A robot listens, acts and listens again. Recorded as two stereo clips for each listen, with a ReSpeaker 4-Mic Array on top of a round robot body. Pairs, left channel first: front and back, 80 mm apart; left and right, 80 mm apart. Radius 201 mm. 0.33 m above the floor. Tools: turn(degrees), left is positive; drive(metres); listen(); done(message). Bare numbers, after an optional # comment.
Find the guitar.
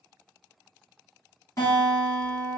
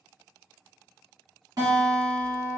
# The guitar: 50° right.
turn(-50)
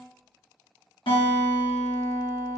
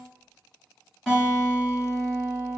done("Facing the guitar.")